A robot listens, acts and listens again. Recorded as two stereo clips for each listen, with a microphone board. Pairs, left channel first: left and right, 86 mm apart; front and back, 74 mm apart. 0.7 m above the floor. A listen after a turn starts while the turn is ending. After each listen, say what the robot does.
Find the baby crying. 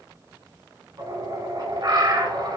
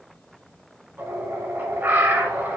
Keep listening.
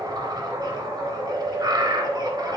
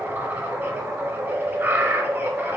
Keep listening.
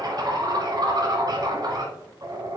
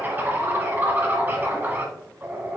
I can't make out a baby crying to turn to.